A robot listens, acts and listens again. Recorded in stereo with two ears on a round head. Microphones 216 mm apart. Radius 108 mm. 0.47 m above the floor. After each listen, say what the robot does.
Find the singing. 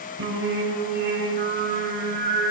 Turn 45° right.
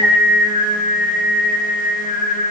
Found it: singing, straight ahead, 2 to 4 m away.